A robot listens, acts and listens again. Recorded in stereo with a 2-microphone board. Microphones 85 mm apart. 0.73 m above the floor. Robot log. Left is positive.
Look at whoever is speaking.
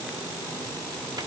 cmd idle
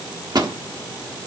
cmd idle
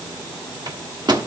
end: I can't make out anyone speaking to turn to.